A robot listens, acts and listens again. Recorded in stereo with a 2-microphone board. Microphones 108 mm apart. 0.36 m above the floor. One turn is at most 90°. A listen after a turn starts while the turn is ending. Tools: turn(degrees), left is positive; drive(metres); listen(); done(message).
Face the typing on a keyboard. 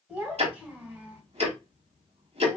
listen()
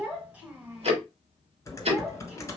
turn(degrees=30)
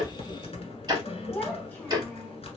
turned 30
turn(degrees=90)
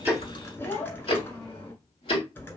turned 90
turn(degrees=20)
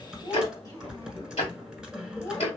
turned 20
turn(degrees=-10)
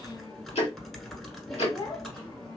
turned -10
done("Found it: typing on a keyboard, straight ahead, 1 to 2 m away.")